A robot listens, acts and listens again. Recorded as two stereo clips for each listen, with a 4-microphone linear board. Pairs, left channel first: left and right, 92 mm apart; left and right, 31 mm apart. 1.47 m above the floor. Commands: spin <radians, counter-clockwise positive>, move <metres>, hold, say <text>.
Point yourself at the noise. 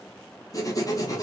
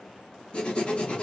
spin 0.61
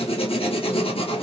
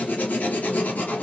spin 1.83
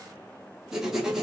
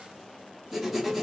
say Found it: writing, straight ahead.